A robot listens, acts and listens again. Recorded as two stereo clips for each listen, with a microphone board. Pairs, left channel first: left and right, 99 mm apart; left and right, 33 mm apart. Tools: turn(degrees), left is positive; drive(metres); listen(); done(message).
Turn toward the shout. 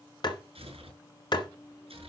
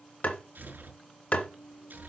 listen()
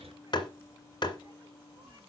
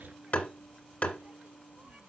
listen()
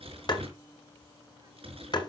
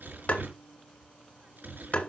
done("I can't make out a shout to turn to.")